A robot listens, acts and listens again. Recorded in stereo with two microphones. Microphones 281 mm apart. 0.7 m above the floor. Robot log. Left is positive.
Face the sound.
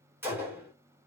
cmd yaw -30
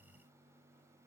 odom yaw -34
cmd idle
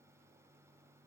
end: I heard a gunshot, but can't make it out now. It was about 25° left or 140° right.